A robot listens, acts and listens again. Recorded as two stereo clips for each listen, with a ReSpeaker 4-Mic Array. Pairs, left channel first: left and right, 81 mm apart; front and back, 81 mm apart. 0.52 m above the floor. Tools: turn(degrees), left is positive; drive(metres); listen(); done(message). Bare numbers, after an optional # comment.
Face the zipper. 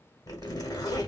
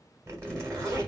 # The zipper: 130° left.
turn(130)
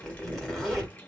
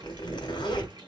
done("Facing the zipper.")